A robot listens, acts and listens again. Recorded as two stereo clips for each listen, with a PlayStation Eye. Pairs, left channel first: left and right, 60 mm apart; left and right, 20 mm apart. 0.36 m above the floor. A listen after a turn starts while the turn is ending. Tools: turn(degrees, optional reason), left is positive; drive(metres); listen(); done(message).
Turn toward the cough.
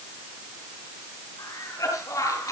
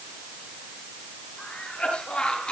turn(degrees=70, reason="The cough: about 70° left or 110° left.")
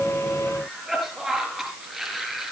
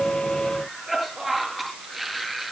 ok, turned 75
done("Found it: a cough, straight ahead, over 4 m away.")